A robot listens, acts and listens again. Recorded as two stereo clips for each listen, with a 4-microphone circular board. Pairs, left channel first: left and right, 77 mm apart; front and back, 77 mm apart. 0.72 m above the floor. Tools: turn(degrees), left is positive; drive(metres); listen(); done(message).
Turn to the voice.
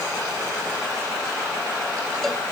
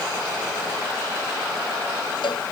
listen()
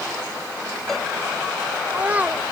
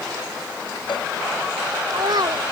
turn(degrees=-160)
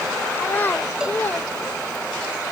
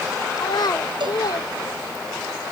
turn(degrees=25)
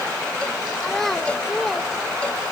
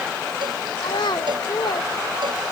done("Found it: a child speaking, straight ahead.")